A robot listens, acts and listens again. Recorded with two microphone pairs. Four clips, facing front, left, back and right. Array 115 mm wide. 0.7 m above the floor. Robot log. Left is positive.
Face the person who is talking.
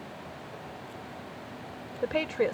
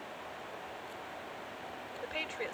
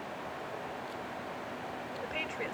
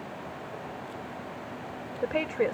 note: The woman speaking: 40° right.
cmd yaw -40
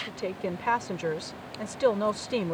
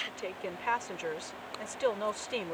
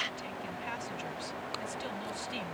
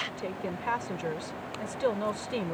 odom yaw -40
end: Found it: a woman speaking, straight ahead.